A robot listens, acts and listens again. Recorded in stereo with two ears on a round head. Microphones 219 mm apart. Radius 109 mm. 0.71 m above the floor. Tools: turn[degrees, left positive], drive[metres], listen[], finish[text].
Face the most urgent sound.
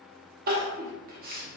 Thought: The crying: about 40° right or 140° right.
Action: turn[-40]
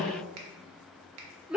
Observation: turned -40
Action: finish[Found it: crying, straight ahead, under 1 m away.]